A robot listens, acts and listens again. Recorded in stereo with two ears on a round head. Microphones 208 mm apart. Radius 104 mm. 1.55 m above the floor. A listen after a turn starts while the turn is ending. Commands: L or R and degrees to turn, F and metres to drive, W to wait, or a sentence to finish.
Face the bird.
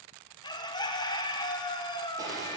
L20
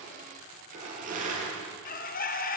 L140
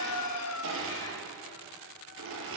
L65
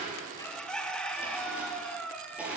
Found it: a bird, straight ahead.